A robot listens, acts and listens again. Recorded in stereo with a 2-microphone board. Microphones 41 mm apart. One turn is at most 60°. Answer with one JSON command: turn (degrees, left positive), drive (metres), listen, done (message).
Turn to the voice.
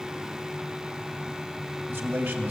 {"turn": -60}
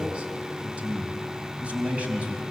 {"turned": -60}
{"turn": -30}
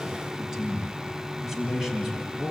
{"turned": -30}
{"done": "Found it: a man speaking, straight ahead."}